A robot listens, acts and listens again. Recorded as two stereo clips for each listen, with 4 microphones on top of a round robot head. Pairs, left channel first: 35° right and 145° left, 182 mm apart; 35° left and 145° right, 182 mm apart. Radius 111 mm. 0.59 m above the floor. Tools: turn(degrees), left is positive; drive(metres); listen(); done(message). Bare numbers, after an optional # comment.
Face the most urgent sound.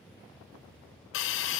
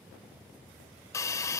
listen()
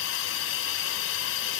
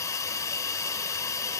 listen()
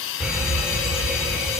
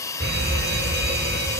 # The fire alarm: 130° right.
turn(-130)
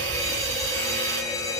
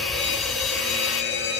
# The fire alarm is now 35° left.
turn(35)
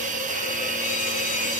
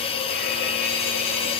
listen()
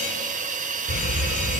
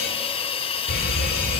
done("Facing the fire alarm, 2 to 4 m away.")